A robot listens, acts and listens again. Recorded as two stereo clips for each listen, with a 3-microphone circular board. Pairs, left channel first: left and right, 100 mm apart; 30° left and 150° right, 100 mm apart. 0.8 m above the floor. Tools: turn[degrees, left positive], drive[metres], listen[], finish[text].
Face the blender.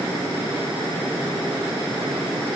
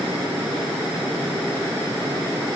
Action: listen[]
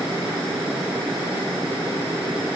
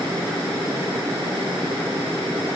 Action: listen[]
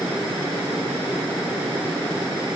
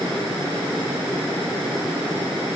Action: finish[I can't make out a blender.]